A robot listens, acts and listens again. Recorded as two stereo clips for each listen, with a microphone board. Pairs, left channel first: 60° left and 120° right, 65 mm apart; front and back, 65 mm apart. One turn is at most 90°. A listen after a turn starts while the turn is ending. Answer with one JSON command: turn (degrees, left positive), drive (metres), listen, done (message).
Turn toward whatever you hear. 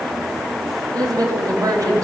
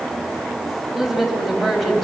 {"turn": -90}
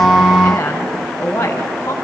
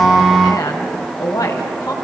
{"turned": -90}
{"turn": 10}
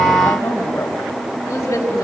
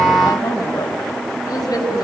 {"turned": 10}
{"turn": 15}
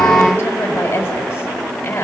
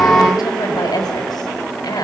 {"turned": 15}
{"done": "Found it: a woman speaking, straight ahead, over 4 m away."}